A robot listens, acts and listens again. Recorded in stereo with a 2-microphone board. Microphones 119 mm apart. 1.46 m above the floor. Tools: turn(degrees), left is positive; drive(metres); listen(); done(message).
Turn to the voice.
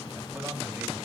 turn(degrees=-30)
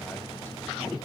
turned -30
listen()
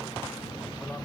listen()
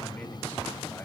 turn(degrees=20)
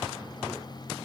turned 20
listen()
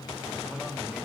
listen()
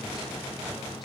done("Facing where the man speaking came from. I can't hear it now.")